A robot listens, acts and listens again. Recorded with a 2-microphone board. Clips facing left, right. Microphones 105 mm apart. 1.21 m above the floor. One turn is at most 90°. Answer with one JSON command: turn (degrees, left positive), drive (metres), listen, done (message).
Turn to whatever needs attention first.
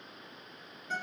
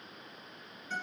{"listen": true}
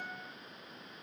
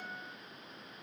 {"listen": true}
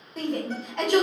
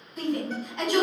{"turn": 65}
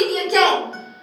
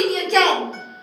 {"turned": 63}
{"done": "Facing the shout."}